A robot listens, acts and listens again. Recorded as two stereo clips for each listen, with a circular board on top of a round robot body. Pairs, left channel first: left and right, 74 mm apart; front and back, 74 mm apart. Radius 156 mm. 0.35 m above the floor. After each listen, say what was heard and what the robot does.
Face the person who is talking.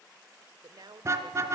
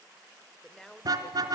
The woman speaking: 80° right. Turn 80° right.
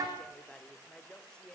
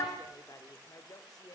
The woman speaking is now 15° left. Turn 15° left.
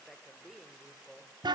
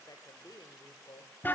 Found it: a woman speaking, straight ahead, 1 to 2 m away.